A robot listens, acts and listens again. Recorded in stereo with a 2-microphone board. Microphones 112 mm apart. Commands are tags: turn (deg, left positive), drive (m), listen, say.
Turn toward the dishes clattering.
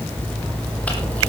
<listen/>
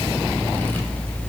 <listen/>
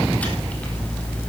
<say>I can't make out dishes clattering to turn to.</say>